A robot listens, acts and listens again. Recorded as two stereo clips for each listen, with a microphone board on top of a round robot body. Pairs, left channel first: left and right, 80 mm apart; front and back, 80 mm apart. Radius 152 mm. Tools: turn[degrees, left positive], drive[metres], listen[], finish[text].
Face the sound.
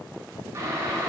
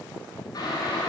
Thought: The boiling: 35° right.
Action: turn[-35]
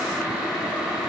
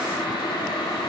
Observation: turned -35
Action: finish[Found it: boiling, straight ahead, 2 to 4 m away.]